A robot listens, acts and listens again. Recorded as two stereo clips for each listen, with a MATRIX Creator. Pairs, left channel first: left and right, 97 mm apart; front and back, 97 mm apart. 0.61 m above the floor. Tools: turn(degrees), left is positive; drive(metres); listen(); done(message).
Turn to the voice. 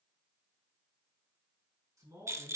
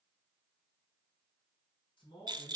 turn(degrees=-40)
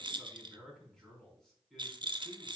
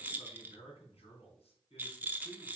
done("Found it: a man speaking, straight ahead.")